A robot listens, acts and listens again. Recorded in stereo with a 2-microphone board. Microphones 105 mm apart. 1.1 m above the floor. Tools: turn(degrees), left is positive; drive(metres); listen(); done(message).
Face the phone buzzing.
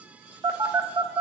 turn(degrees=-45)
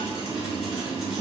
listen()
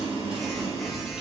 done("Facing the phone buzzing.")